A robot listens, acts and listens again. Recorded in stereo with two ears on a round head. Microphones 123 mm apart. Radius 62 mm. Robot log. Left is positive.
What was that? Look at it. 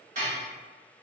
note: The dishes clattering: about 60° right or 120° right.
cmd yaw -60
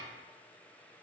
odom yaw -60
cmd idle
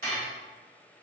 note: So it is at 60° right.
cmd yaw -60
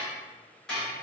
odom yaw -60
end: Found it: dishes clattering, straight ahead.